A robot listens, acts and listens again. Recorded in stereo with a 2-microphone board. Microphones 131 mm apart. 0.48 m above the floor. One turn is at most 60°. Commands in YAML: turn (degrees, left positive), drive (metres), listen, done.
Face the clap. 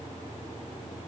listen: true
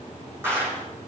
turn: -20
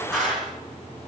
done: "Facing the clap."